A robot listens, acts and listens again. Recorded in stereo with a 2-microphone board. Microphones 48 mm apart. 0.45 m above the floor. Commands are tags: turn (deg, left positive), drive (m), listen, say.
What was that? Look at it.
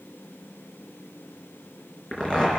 <turn deg="20"/>
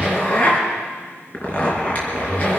<turn deg="140"/>
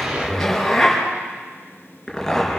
<say>Found it: a zipper, straight ahead, over 4 m away.</say>